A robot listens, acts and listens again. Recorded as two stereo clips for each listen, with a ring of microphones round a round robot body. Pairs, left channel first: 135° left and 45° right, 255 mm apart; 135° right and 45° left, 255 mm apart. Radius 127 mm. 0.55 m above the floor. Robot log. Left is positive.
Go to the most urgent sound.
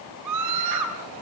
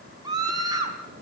note: The scream: 30° right.
cmd yaw -30
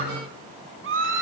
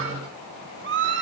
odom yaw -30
cmd fwd 1.0
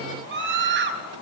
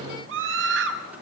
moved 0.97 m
cmd fwd 1.0
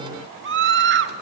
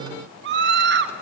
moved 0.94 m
cmd fwd 1.0
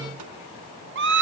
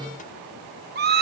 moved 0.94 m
cmd fwd 1.0
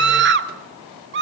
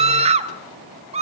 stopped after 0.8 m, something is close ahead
note: The scream is now 15° right.
cmd yaw -15
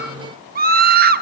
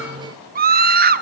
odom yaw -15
end: I am next to the scream.